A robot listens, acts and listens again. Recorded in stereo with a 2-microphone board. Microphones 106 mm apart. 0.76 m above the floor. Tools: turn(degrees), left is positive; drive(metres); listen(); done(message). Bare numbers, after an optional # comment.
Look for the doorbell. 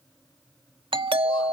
# The doorbell: about 50° right or 130° right.
turn(-50)
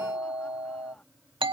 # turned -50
# So it is at 65° right.
turn(-65)
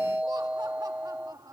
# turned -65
# The doorbell is now 10° right.
turn(-10)
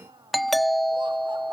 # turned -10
done("Found it: a doorbell, straight ahead.")